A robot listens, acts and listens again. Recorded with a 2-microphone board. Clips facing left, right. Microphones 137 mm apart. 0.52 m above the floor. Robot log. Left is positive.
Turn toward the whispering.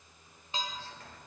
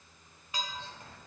note: The whispering: about 20° right or 160° right.
cmd yaw -20
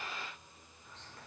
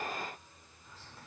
end: Facing the whispering, 1 to 2 m away.